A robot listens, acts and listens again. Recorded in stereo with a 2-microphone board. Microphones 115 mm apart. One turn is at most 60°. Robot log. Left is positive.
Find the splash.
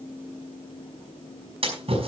note: The splash: about 60° right or 120° right.
cmd yaw -60
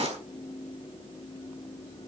note: So it is at 60° right.
cmd yaw -60
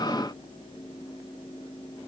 end: I heard a splash from this way, but can't make it out now.